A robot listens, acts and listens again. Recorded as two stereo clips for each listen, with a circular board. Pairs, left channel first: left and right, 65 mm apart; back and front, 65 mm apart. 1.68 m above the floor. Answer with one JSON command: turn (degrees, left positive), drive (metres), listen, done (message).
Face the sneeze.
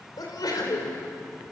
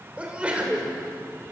{"turn": 70}
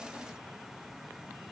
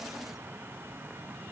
{"done": "Facing where the sneeze came from. I can't hear it now."}